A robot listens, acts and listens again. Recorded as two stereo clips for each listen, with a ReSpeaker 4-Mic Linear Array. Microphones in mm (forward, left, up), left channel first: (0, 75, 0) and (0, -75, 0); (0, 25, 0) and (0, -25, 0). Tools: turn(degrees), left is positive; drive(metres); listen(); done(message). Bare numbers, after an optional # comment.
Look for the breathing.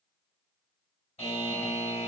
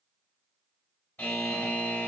listen()
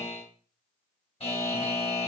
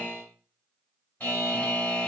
listen()
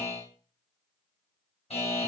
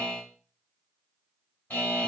done("I can't make out breathing, only a buzzer.")